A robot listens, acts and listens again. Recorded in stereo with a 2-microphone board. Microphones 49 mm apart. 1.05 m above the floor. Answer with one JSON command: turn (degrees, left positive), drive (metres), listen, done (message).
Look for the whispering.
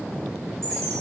{"listen": true}
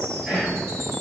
{"turn": -20}
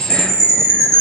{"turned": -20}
{"listen": true}
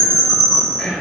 {"done": "Found it: whispering, straight ahead."}